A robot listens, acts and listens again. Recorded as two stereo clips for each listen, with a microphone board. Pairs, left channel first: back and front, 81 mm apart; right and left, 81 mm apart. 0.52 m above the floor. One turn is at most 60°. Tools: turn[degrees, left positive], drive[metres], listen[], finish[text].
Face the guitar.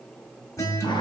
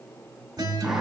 Thought: The guitar: 130° left.
Action: turn[60]
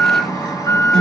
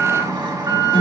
Thought: The guitar is now 90° left.
Action: turn[60]
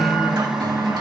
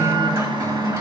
Thought: Nothing new. It was at 30° left.
Action: turn[30]
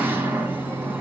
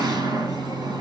Action: listen[]
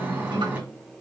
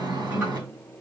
Thought: The guitar is now 15° left.
Action: turn[15]
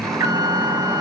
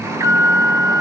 Action: finish[Facing the guitar.]